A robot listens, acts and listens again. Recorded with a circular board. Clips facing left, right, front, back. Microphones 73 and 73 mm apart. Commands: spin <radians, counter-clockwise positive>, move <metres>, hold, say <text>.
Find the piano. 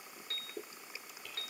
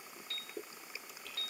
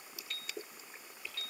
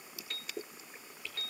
spin 2.36
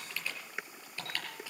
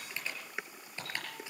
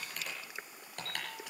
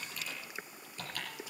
hold
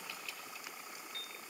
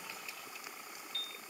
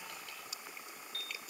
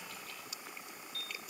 spin 0.52
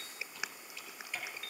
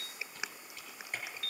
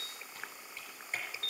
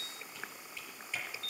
spin 0.17
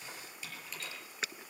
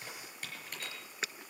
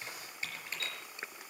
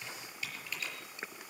hold
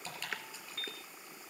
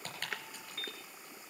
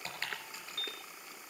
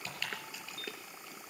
say Found it: a piano, straight ahead.